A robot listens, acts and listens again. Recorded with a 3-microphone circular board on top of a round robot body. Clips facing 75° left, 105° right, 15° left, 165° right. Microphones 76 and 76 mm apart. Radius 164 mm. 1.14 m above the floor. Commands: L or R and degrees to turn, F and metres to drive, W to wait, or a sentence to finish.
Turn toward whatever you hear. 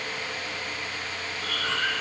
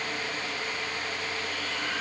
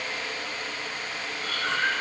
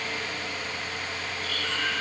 L65
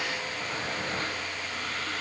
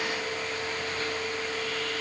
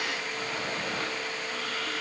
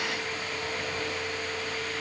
W
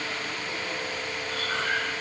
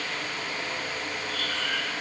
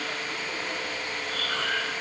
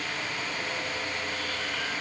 L20
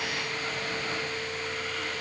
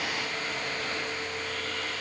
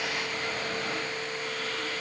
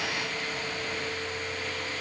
W
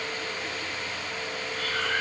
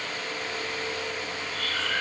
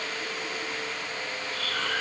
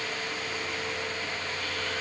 Facing the breathing, over 4 m away.